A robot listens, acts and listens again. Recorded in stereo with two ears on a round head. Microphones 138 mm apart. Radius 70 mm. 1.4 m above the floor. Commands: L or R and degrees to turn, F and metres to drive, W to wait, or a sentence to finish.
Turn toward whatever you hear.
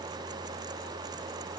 W
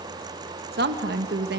R70
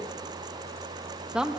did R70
Found it: a woman speaking, straight ahead, 1 to 2 m away.